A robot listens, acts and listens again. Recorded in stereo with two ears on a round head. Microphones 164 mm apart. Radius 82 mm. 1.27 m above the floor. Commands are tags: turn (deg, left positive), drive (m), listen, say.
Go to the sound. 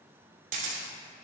<turn deg="-45"/>
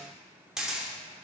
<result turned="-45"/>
<drive m="1.0"/>
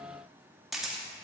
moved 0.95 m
<drive m="1.0"/>
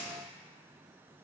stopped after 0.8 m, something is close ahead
<say>Arrived at the camera shutter, straight ahead.</say>